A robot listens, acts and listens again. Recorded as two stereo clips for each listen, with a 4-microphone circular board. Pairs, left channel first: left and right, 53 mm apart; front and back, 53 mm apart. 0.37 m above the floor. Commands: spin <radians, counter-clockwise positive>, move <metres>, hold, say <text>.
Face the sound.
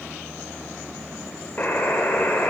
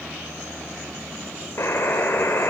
spin 0.52
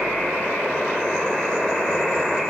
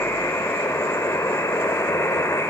say Facing the buzzer, over 4 m away.